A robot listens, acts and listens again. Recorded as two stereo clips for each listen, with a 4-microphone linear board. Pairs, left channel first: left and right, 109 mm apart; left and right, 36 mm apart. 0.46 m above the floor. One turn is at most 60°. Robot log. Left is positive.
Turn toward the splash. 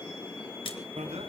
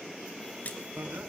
note: The splash: about 50° left or 130° left.
cmd yaw +50
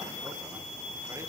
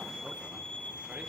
cmd idle
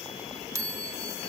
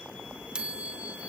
end: I heard a splash, but can't make it out now. It was about straight ahead or 80° left.